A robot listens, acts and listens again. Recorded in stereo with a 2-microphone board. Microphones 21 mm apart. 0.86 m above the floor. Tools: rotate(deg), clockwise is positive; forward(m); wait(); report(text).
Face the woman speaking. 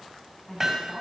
rotate(-30)
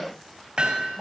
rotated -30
wait()
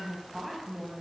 report("Found it: a woman speaking, straight ahead.")